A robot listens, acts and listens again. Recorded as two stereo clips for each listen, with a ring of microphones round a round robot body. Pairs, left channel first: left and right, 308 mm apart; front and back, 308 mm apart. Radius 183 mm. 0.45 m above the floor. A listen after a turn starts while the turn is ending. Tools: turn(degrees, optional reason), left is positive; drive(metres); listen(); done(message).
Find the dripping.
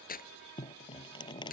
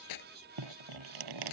turn(degrees=165, reason="The dripping: 165° left.")
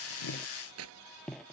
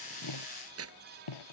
done("Facing the dripping.")